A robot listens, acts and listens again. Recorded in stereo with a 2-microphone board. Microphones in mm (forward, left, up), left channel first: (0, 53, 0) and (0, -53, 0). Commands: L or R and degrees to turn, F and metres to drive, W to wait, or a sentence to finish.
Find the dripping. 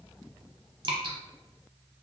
R50
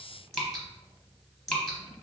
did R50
Found it: dripping, straight ahead, under 1 m away.